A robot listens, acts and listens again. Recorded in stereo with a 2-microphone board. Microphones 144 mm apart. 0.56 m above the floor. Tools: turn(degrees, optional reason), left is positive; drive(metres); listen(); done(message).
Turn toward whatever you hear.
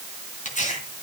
turn(degrees=55, reason="The tearing paper: about 55° left or 125° left.")
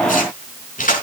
turn(degrees=70, reason="So it is at 70° left.")
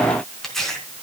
done("Facing the tearing paper, over 4 m away.")